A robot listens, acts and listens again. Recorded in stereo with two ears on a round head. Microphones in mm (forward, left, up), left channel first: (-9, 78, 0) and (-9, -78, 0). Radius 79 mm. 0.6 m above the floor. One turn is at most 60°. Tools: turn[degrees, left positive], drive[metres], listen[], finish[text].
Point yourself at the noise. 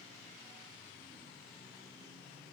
Action: listen[]
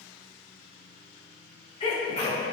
Thought: The sneeze: about 35° left or 145° left.
Action: turn[35]
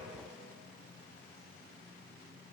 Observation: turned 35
Action: listen[]
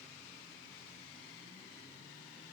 Action: finish[I heard a sneeze, but can't make it out now. It was about straight ahead or 110° left.]